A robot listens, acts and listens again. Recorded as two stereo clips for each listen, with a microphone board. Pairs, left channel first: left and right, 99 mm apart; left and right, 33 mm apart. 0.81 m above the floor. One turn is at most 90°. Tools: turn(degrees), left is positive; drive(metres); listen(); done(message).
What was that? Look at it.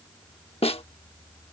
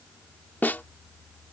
turn(degrees=90)
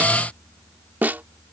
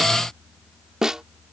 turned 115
turn(degrees=-20)
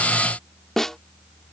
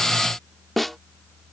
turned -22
done("Found it: a snare drum, straight ahead.")